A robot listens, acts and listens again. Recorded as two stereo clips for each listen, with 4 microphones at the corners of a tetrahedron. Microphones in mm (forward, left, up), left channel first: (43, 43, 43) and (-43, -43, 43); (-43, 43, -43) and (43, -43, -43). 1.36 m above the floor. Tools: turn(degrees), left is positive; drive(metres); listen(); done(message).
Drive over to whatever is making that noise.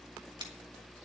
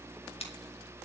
turn(degrees=175)
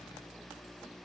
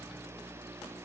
listen()
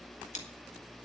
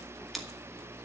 turn(degrees=45)
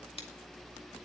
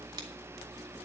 listen()
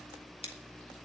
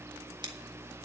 turn(degrees=10)
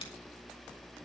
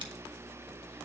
listen()
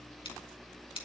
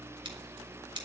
drive(metres=1.0)
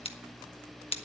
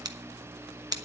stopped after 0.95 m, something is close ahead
turn(degrees=10)
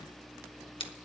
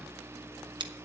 done("I am next to the scissors.")